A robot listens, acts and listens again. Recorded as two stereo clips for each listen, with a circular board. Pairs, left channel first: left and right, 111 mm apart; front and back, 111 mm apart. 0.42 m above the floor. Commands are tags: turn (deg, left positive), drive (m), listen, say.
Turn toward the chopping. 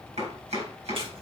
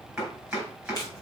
<turn deg="-95"/>
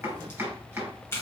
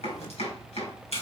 <turn deg="-15"/>
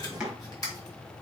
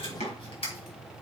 <say>Facing the chopping.</say>